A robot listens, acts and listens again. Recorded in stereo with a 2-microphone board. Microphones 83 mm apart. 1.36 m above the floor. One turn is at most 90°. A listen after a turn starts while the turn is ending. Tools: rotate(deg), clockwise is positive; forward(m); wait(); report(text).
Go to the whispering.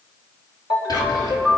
rotate(-60)
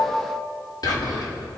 rotate(-60)
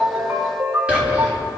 rotate(15)
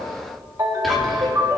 forward(1.0)
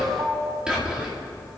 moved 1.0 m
rotate(10)
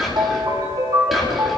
forward(1.0)
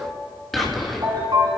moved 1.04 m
forward(1.0)
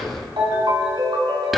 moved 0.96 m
forward(1.0)
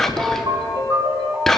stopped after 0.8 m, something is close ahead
report("I am next to the whispering.")